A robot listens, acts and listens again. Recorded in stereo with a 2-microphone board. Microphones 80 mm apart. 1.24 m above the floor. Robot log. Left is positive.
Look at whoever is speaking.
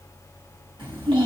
cmd yaw -90
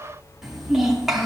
end: Found it: a child speaking, straight ahead.